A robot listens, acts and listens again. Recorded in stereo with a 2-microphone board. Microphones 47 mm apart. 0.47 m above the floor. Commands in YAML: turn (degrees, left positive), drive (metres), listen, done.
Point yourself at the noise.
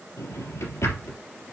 turn: 90
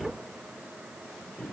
done: "Found it: a drawer, straight ahead, 2 to 4 m away."